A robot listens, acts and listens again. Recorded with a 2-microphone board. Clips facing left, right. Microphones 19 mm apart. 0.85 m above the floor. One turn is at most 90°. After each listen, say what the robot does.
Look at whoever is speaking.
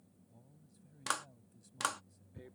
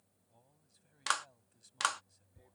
Turn 25° right.
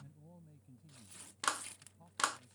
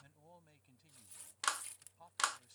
Turn 90° right.
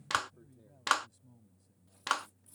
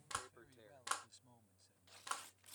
Turn 50° right.
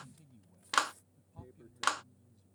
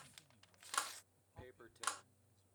Found it: a man speaking, straight ahead.